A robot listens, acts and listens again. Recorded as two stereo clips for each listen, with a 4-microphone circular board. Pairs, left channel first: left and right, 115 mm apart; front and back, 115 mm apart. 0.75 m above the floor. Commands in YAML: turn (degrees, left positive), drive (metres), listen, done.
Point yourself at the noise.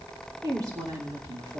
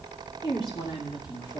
turn: -40
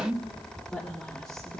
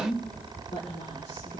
turn: 10
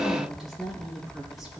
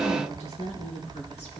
done: "Facing the woman speaking, 2 to 4 m away."